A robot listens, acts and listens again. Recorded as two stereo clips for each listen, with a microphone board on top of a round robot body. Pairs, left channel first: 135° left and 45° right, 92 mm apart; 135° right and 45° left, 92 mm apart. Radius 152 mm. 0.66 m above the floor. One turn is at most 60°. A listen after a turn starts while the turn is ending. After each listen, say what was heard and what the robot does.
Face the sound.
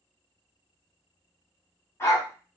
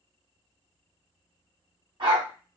The dog barking: 75° left. Turn 60° left.
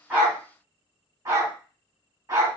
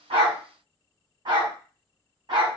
The dog barking is now 10° left. Turn 10° left.
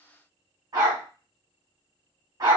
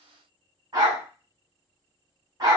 Found it: a dog barking, straight ahead.